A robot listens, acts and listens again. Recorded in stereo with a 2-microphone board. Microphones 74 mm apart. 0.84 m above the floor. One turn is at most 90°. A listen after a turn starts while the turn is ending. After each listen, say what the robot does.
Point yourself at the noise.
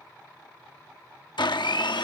Turn 90° left.
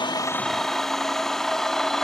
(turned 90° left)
Facing the blender.